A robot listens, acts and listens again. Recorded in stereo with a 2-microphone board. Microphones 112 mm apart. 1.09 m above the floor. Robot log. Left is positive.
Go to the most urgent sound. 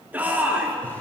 note: The shout: about 15° right or 165° right.
cmd yaw -15
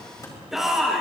cmd fwd 1.0
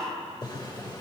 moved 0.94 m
cmd idle
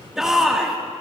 cmd fwd 1.0
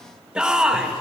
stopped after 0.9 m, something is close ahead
note: The shout is now 10° right.
cmd yaw -10
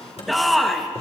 end: Arrived at the shout, straight ahead.